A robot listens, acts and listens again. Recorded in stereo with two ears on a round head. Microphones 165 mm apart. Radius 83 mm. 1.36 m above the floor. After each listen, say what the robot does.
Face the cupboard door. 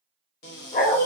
Turn 65° left.
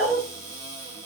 Turn 15° left.
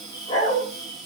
Found it: a cupboard door, straight ahead, under 1 m away.